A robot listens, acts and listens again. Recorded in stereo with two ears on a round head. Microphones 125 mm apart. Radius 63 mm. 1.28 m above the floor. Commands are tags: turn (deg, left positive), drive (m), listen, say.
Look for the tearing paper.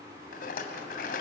<listen/>
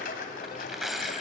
<turn deg="30"/>
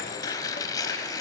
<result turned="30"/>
<turn deg="150"/>
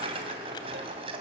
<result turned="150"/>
<listen/>
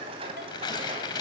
<turn deg="35"/>
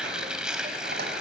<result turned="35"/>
<say>Facing the tearing paper.</say>